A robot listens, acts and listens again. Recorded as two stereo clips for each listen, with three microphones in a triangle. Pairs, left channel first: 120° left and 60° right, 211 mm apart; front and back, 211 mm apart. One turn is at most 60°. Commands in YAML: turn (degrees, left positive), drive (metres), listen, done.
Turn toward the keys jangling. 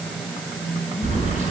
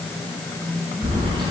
turn: -60
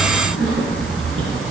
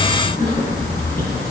turn: -45
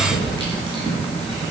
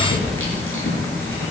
turn: 10
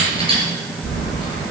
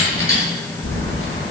done: "Facing the keys jangling."